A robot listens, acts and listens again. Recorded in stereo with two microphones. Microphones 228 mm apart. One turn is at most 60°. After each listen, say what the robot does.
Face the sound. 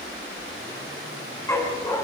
Turn 30° left.
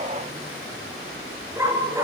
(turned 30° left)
Turn 15° right.
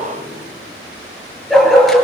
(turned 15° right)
Found it: a dog barking, straight ahead.